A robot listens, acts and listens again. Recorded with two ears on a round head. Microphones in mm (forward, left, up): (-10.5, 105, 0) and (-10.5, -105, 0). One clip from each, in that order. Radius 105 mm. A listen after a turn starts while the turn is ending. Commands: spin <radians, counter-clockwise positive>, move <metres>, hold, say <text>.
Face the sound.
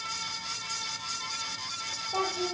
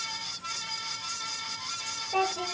spin -1.22
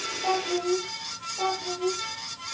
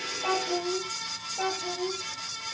spin -0.79
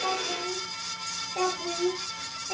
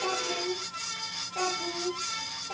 say Facing the child speaking, over 4 m away.